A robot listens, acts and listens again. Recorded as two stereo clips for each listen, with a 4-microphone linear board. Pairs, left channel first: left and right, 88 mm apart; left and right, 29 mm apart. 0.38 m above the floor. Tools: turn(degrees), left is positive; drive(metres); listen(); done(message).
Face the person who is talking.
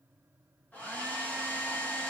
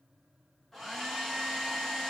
listen()
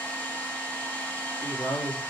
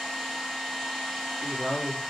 turn(degrees=70)
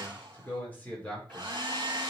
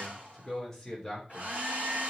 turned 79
turn(degrees=15)
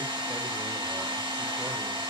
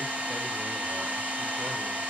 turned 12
listen()
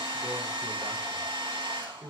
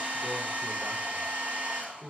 done("Facing the man speaking, over 4 m away.")